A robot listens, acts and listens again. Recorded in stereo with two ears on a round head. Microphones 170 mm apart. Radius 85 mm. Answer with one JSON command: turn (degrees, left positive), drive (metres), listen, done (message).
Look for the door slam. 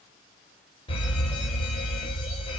{"listen": true}
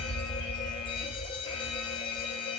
{"listen": true}
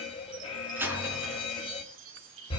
{"turn": -30}
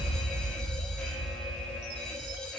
{"listen": true}
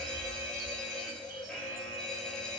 {"done": "I heard a door slam, but can't make it out now. It was about 20° left or 140° right."}